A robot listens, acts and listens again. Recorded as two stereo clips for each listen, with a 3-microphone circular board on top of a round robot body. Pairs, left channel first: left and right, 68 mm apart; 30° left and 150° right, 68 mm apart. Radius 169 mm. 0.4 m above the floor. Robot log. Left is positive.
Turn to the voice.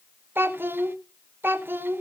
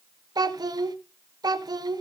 note: The child speaking: 150° right.
cmd yaw -150
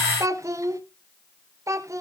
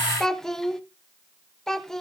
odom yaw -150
note: The child speaking is now 55° right.
cmd yaw -55
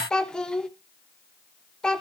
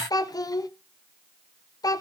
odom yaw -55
note: The child speaking is now 10° left.
cmd yaw +10
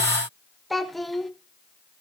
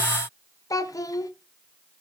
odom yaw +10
end: Facing the child speaking, 1 to 2 m away.